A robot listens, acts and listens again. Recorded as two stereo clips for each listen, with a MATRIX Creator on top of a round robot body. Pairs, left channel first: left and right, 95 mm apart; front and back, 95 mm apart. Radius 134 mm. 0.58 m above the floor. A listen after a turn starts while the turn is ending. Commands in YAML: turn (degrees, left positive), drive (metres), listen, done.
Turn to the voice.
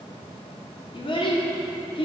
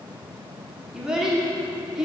turn: 95
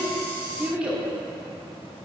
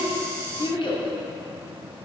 turn: -10
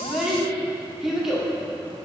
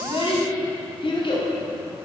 done: "Found it: a child speaking, straight ahead."